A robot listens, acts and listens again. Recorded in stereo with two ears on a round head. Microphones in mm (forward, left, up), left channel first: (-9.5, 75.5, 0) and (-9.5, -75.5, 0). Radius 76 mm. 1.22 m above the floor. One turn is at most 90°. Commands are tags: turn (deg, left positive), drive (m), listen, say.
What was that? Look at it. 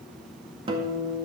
<turn deg="-30"/>
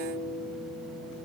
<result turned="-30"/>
<turn deg="-90"/>
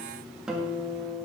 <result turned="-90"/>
<say>Found it: a guitar, straight ahead.</say>